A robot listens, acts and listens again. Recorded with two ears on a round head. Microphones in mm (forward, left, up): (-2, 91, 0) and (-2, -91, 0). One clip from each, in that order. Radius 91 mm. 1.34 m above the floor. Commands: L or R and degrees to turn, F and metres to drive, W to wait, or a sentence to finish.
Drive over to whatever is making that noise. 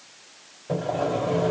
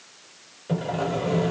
R55
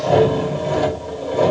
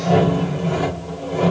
F1.0
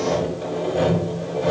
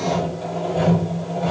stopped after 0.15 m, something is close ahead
Blocked. The sawing is further on, straight ahead.